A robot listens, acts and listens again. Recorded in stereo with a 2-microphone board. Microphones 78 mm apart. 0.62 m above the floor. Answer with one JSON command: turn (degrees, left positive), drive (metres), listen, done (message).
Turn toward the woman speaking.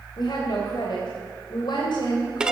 {"turn": 75}
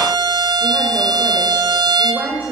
{"turn": -25}
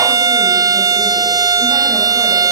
{"listen": true}
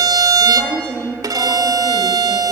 {"turn": -10}
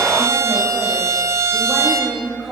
{"done": "Found it: a woman speaking, straight ahead, 2 to 4 m away."}